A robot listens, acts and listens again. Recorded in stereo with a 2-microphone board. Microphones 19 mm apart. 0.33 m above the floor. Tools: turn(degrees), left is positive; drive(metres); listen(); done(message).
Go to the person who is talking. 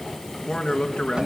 turn(degrees=40)
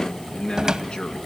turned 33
turn(degrees=105)
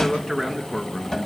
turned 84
turn(degrees=20)
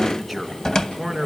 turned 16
drive(metres=1.0)
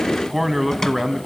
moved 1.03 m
drive(metres=1.0)
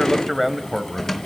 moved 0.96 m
drive(metres=1.0)
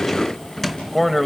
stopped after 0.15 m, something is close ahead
turn(degrees=10)
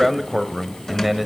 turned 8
done("I am next to the man speaking.")